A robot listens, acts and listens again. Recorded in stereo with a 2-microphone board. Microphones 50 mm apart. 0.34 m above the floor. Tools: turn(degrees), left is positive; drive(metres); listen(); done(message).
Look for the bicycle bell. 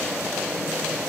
listen()
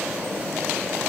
listen()
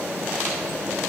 done("I can't make out a bicycle bell.")